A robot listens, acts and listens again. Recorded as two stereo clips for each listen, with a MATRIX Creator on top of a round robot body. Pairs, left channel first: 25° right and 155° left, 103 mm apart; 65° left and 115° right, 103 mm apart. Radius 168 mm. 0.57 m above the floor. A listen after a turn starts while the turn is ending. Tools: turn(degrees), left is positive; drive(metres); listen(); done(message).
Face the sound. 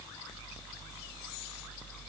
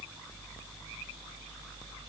listen()
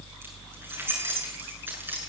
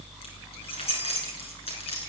turn(degrees=90)
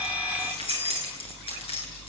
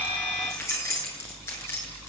done("Facing the keys jangling, over 4 m away.")